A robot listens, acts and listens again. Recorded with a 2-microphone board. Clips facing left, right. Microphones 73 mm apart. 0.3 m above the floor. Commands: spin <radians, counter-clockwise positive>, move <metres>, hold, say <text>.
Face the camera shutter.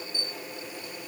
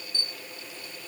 spin 0.52
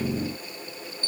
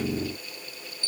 spin 2.44
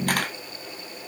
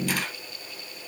spin 0.96
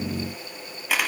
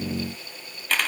spin 0.17
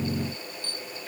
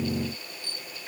say Facing the camera shutter, 1 to 2 m away.